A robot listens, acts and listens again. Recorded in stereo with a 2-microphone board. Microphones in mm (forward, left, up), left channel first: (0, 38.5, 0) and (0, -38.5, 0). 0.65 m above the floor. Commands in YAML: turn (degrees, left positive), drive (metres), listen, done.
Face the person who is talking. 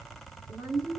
turn: -55
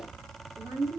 turn: -50
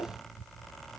done: "Facing the woman speaking, 1 to 2 m away."